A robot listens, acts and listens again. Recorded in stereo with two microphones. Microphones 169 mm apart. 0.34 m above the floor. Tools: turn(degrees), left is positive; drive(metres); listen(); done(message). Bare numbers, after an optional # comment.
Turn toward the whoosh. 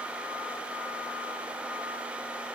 listen()
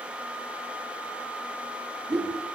# The whoosh: about 20° right or 160° right.
turn(-20)
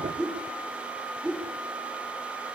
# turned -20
done("Found it: a whoosh, straight ahead, over 4 m away.")